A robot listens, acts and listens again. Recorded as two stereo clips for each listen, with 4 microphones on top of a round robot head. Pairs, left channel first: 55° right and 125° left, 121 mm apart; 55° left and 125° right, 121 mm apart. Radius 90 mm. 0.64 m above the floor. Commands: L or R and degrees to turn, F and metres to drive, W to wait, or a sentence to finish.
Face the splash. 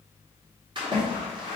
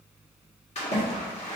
L80
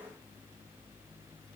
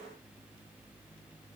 Facing where the splash came from. I can't hear it now.